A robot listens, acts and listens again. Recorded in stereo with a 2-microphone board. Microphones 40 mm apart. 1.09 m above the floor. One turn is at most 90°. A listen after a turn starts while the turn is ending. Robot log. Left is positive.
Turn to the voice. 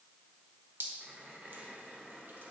cmd idle
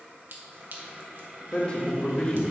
note: The man speaking: about 35° left or 145° left.
cmd yaw +35
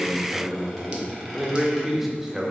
end: Facing the man speaking, 1 to 2 m away.